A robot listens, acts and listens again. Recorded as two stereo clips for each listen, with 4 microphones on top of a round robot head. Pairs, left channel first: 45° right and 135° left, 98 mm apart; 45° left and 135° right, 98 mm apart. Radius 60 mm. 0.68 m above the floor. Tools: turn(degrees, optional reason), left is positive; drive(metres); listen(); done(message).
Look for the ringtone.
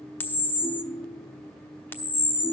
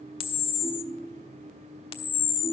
turn(degrees=-170, reason="The ringtone: 170° right.")
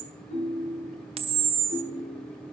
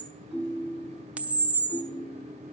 turn(degrees=-50, reason="The ringtone is now 50° right.")
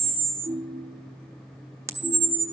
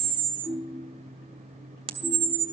done("Found it: a ringtone, straight ahead.")